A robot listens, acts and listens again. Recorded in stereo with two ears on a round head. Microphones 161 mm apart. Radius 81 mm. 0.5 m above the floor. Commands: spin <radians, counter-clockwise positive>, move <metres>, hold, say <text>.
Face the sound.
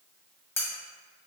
spin 0.52
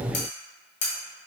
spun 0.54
spin 2.36
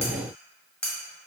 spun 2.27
say Facing the cutlery clinking, 1 to 2 m away.